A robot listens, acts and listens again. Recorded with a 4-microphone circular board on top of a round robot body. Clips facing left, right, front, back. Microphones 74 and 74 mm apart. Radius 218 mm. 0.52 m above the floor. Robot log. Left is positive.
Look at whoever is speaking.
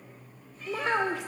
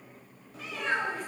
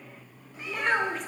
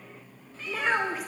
note: The child speaking: 95° left.
cmd yaw +95
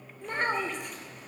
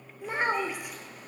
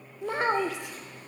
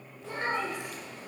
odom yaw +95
end: Facing the child speaking.